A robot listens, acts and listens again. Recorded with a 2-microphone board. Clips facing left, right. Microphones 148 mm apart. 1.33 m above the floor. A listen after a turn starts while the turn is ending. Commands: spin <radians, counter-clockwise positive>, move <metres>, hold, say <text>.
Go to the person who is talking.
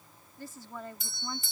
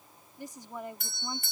spin -0.35
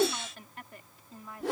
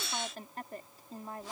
spin -2.44
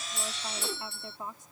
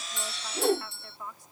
spin 0.44
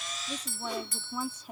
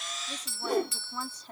spin 0.17
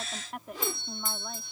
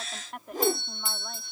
move 1.0
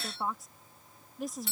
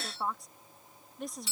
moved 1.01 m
move 1.0
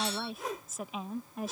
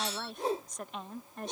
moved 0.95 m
move 1.0
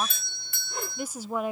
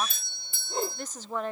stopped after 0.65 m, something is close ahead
spin 0.17
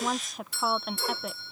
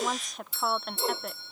say I am next to the woman speaking.